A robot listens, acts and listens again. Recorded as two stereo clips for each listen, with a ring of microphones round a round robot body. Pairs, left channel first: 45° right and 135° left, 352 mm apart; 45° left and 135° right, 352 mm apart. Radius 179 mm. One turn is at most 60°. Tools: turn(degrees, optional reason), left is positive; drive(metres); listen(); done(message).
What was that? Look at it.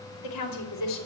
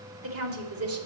turn(degrees=-60, reason="The woman speaking: 85° right.")
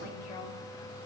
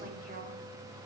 turn(degrees=-25, reason="Nothing new. It was at 25° right.")
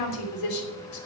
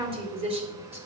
turn(degrees=-60, reason="The woman speaking is now 60° right.")
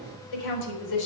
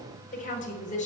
turn(degrees=-25, reason="The woman speaking is now 25° right.")
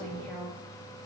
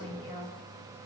turn(degrees=15, reason="The woman speaking is now 15° left.")
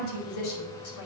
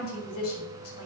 done("Facing the woman speaking.")